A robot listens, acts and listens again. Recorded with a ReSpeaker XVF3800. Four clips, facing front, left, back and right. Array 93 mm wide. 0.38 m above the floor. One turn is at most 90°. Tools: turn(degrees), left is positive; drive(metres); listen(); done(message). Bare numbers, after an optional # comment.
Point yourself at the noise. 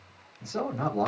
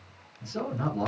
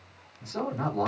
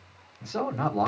# The man speaking: 80° right.
turn(-80)
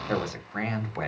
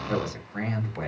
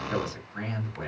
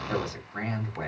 done("Found it: a man speaking, straight ahead, 1 to 2 m away.")